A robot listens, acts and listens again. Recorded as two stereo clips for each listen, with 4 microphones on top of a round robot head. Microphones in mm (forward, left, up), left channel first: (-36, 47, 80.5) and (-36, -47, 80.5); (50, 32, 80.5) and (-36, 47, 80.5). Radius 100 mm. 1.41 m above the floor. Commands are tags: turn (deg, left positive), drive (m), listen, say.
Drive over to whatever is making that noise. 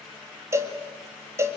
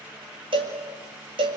<turn deg="-150"/>
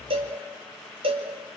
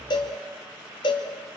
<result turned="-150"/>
<turn deg="-55"/>
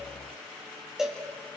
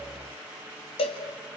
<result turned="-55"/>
<drive m="1.0"/>
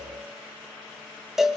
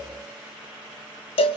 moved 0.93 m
<drive m="1.0"/>
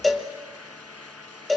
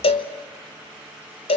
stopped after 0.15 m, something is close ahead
<say>I am next to the cowbell.</say>